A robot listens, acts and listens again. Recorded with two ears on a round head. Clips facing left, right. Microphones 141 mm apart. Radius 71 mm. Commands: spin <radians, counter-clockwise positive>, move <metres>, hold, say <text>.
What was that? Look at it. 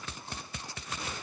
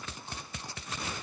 hold
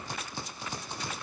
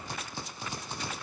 hold
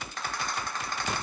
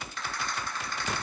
spin 0.61
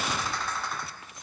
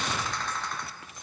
say Found it: a rattle, straight ahead, 1 to 2 m away.